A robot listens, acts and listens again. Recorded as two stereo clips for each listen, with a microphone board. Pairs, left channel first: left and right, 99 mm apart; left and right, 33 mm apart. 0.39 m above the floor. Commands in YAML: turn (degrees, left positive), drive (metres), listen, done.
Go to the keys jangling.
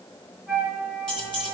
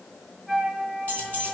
turn: 55
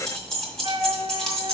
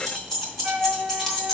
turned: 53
drive: 1.0
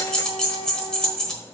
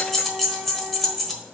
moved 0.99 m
turn: 10
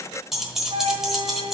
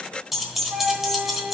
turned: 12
drive: 1.0
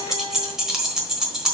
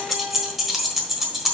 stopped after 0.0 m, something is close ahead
done: "I am next to the keys jangling."